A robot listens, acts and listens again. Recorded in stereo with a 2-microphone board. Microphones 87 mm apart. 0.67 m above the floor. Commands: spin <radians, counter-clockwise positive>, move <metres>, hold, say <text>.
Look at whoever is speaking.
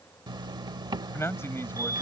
spin 0.52
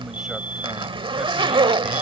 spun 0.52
hold
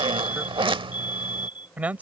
spin -0.26
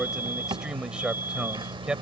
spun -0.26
spin -0.17
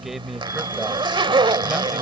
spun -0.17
say Found it: a man speaking, straight ahead.